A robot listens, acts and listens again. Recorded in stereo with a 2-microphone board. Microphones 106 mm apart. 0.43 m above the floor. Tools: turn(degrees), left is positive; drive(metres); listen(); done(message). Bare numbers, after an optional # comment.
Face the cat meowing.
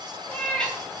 turn(30)
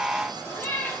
# The cat meowing: about 20° left or 160° left.
turn(20)
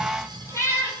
# So it is at 155° left.
turn(155)
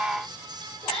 # The cat meowing is now 70° left.
turn(70)
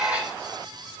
listen()
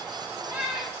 # The cat meowing is now 10° right.
turn(-10)
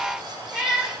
done("Facing the cat meowing, 2 to 4 m away.")